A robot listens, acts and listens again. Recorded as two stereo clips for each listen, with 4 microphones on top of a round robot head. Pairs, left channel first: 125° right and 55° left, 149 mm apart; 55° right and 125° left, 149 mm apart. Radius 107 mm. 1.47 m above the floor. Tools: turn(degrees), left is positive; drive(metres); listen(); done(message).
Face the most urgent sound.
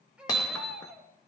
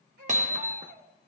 turn(degrees=135)
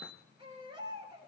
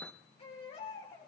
done("Found it: a baby crying, straight ahead.")